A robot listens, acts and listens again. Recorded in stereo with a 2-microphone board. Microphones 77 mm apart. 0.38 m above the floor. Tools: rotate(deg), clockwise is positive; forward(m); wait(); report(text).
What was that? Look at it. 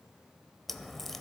rotate(-30)
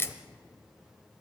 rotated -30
rotate(-145)
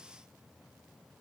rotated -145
report("I heard a crack from this way, but can't make it out now.")